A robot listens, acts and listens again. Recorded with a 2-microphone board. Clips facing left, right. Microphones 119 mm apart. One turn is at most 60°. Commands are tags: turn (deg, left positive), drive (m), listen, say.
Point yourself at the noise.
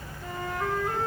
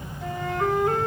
<turn deg="-60"/>
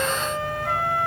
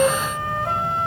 <turn deg="-30"/>
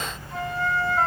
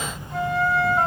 <say>Found it: a flute, straight ahead, 2 to 4 m away.</say>